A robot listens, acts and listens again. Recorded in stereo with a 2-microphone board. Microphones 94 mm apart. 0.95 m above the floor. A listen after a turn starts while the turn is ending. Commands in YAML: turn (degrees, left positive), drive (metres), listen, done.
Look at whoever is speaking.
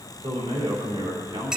turn: -90
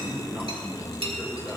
done: "Facing the man speaking."